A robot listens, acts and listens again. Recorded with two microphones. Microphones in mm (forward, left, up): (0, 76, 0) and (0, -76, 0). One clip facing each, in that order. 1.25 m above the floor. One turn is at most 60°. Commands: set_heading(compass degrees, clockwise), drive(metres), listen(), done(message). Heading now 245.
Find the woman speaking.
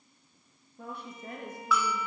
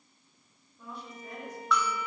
set_heading(195)
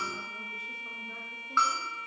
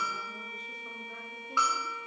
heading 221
listen()
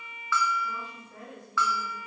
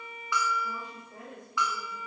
set_heading(236)
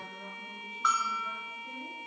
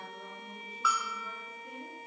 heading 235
set_heading(245)
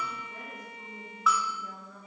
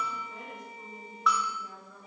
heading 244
done("Facing the woman speaking.")